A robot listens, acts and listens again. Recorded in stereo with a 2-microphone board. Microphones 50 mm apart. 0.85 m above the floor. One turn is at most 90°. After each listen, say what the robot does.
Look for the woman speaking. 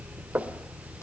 Keep listening.
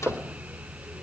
Keep listening.
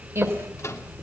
Turn 70° right.
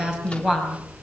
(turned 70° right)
Turn 15° right.
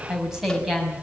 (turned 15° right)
Turn 10° right.
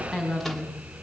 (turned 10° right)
Facing the woman speaking.